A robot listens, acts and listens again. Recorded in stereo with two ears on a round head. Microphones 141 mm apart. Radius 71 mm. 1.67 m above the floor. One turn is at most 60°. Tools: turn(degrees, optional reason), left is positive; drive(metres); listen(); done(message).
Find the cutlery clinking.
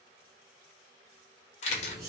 turn(degrees=-20, reason="The cutlery clinking: about 20° right or 160° right.")
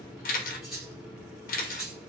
done("Found it: cutlery clinking, straight ahead, 1 to 2 m away.")